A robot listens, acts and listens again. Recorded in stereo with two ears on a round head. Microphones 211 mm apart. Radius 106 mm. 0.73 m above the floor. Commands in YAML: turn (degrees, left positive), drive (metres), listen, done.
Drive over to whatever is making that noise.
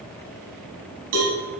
turn: -75
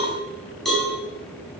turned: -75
drive: 1.0
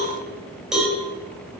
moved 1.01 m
drive: 1.0
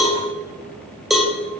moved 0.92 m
drive: 1.0
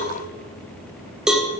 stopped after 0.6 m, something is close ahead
done: "I am next to the cowbell."